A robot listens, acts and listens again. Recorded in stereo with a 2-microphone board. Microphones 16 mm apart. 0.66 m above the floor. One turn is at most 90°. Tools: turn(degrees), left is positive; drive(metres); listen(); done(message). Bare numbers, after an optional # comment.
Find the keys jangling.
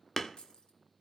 # The keys jangling: about 65° left or 115° left.
turn(65)
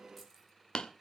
listen()
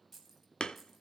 done("Found it: keys jangling, straight ahead.")